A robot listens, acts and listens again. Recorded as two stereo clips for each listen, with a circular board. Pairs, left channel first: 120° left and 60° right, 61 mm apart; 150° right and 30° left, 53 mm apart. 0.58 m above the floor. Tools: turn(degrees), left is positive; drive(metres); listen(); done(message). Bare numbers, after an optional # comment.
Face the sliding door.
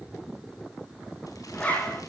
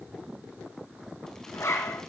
listen()
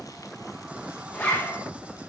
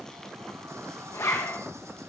listen()
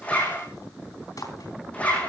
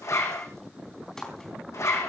done("I can't make out a sliding door, only a zipper.")